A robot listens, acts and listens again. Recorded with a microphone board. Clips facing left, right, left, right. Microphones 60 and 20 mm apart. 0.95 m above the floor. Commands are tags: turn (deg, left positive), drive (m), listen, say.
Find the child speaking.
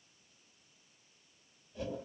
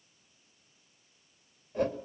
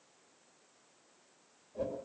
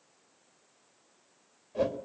<listen/>
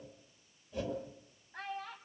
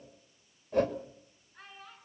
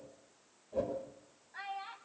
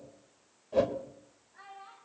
<turn deg="90"/>
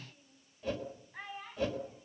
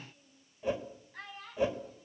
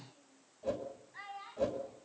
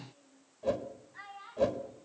<turn deg="15"/>
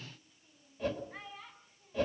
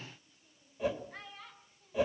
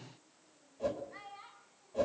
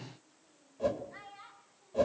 <say>Found it: a child speaking, straight ahead, over 4 m away.</say>